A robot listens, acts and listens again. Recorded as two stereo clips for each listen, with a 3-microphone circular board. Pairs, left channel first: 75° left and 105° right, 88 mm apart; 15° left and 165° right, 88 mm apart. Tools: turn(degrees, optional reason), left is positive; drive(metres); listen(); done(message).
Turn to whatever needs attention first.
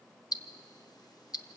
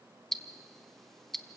listen()
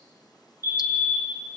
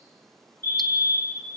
turn(degrees=-50, reason="The fire alarm: 50° right.")
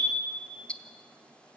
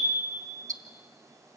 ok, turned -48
done("Found it: a fire alarm, straight ahead.")